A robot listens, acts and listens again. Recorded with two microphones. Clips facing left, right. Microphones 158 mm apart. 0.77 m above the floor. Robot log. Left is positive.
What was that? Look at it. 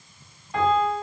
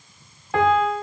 note: The piano: about 75° right or 105° right.
cmd yaw -75
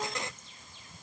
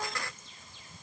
cmd idle
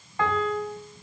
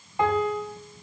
note: So it is at 20° right.
cmd yaw -20
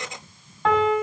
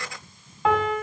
end: Found it: a piano, straight ahead.